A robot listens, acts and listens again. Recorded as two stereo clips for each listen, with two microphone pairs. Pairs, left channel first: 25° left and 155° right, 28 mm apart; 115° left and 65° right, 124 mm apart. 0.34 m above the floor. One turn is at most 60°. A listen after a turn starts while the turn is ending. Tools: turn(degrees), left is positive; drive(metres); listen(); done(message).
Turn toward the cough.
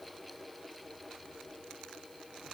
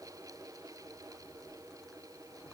listen()
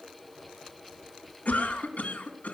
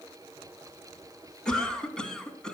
turn(degrees=30)
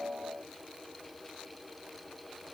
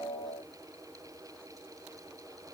listen()
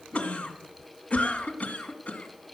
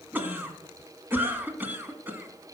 done("Facing the cough.")